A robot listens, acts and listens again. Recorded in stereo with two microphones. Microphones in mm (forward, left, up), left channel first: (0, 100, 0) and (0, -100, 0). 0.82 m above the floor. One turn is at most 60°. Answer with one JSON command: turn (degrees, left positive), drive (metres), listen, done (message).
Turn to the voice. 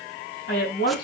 {"turn": 60}
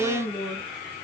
{"turn": 45}
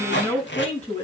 {"turn": 10}
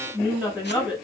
{"done": "Facing the woman speaking."}